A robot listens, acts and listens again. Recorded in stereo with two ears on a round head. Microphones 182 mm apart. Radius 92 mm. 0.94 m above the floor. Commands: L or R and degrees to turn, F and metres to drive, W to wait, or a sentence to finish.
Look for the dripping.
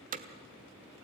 W
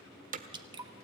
R20
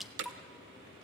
Facing the dripping, 1 to 2 m away.